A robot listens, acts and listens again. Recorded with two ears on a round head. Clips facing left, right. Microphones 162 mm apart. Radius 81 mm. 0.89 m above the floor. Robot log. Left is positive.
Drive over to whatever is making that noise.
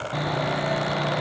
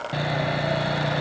note: The sawing: about 25° right or 155° right.
cmd yaw -25
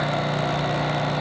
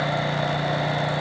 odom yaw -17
note: So it is at 10° right.
cmd yaw -10
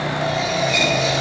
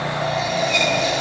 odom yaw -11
cmd fwd 1.0
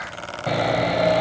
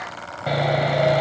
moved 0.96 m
cmd fwd 1.0
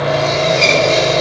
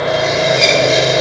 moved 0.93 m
note: The sawing is now 10° right.
cmd yaw -10
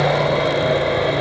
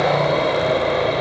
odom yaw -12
cmd fwd 1.0
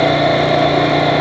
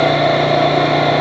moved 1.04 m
cmd fwd 1.0
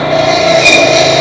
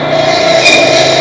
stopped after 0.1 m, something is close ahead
end: Arrived at the sawing, straight ahead.